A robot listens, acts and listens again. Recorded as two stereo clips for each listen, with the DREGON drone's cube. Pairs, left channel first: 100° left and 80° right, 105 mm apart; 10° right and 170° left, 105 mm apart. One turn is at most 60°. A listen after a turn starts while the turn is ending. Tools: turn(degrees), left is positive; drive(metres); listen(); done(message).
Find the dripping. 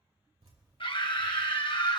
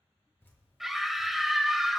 turn(degrees=-60)
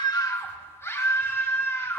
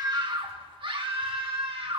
turn(degrees=-20)
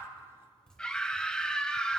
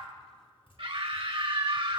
turn(degrees=20)
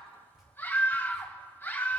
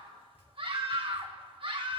done("Found it: dripping, straight ahead, over 4 m away.")